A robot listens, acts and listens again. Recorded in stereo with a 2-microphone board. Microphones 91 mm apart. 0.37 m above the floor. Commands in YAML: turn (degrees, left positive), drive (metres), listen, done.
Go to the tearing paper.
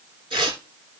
turn: -60
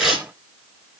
drive: 1.0
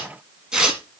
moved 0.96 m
turn: -10
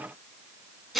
drive: 1.0
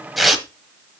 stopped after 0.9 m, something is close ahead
done: "Arrived at the tearing paper, straight ahead."